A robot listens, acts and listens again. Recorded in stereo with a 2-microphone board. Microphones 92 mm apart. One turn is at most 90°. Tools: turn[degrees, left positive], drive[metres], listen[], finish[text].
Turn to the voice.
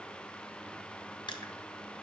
Action: listen[]
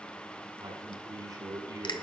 Thought: The man speaking: about 40° right or 140° right.
Action: turn[-40]
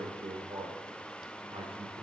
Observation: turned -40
Thought: So it is at 95° right.
Action: turn[-90]
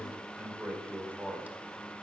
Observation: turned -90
Thought: The man speaking is now 15° right.
Action: turn[-15]
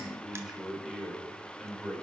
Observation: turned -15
Action: finish[Found it: a man speaking, straight ahead.]